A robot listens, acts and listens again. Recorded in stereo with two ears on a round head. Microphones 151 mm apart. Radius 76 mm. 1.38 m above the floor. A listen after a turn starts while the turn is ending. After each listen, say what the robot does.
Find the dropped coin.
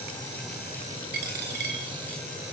Turn 70° right.
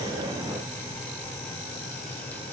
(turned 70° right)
Keep listening.
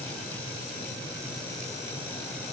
I heard a dropped coin, but can't make it out now. It was about straight ahead or 40° right.